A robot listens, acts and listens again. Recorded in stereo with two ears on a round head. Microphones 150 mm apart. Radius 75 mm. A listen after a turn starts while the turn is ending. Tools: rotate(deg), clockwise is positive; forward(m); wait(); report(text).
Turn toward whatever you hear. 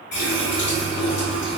rotate(-65)
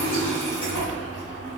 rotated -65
rotate(-45)
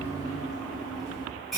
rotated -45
report("Found it: a running tap, straight ahead.")